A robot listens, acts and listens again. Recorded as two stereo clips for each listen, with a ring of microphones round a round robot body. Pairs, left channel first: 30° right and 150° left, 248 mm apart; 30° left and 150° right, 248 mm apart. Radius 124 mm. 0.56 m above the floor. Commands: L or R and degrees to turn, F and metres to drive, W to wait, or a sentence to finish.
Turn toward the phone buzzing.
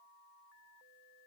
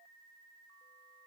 W
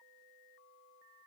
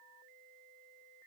W
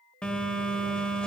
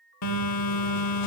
L55
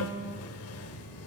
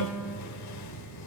Facing the phone buzzing.